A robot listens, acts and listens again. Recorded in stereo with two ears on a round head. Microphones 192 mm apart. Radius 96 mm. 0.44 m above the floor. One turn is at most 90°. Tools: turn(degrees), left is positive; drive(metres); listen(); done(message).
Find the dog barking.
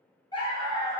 turn(degrees=25)
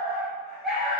done("Facing the dog barking.")